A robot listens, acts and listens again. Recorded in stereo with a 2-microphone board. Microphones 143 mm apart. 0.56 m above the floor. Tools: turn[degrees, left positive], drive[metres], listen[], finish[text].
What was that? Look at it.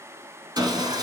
Thought: The sawing: about 30° right or 150° right.
Action: turn[-30]
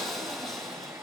Action: finish[Facing the sawing.]